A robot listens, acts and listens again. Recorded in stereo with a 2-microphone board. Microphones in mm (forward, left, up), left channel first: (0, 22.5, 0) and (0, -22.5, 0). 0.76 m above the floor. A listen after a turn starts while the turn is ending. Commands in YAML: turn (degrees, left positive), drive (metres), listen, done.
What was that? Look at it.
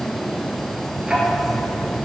turn: -15
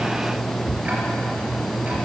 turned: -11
listen: true
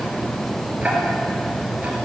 turn: -150
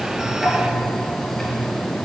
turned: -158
done: "Found it: ticking, straight ahead, 2 to 4 m away."